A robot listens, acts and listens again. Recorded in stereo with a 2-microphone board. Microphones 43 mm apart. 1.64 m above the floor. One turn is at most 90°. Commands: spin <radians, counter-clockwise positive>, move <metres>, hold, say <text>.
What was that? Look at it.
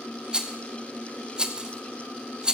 spin -0.26
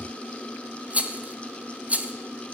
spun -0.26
spin -1.57
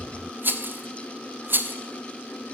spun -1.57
spin -0.87
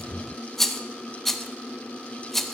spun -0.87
say Found it: a rattle, straight ahead.